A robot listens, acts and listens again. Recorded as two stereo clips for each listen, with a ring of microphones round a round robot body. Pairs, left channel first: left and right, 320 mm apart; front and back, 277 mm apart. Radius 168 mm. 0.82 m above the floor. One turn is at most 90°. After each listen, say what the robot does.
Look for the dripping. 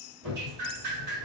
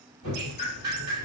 Turn 90° right.
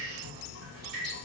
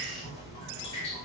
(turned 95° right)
Turn 50° right.
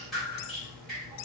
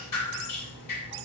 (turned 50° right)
Facing the dripping.